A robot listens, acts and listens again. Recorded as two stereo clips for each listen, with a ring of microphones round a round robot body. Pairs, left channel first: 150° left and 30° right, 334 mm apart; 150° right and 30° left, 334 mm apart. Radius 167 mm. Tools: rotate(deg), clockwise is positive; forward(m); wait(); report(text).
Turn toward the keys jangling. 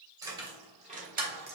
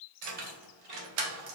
rotate(-30)
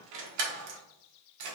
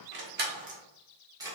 rotate(50)
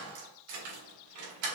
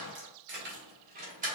rotate(40)
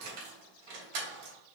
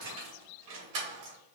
rotate(20)
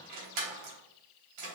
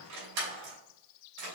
report("Found it: keys jangling, straight ahead, 2 to 4 m away.")